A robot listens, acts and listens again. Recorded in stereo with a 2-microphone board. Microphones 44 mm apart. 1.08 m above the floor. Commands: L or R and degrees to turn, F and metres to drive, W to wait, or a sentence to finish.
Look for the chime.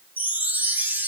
R45
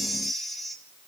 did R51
Facing the chime, 1 to 2 m away.